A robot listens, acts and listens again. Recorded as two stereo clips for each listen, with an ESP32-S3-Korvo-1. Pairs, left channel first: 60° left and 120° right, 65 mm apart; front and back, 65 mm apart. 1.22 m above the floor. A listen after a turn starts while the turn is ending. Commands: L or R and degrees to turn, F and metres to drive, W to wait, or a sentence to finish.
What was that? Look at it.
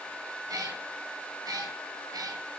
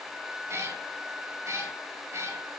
R140
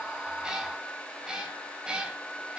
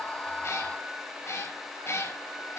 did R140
R45
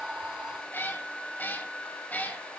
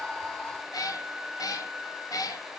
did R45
Found it: a cat meowing, straight ahead, 2 to 4 m away.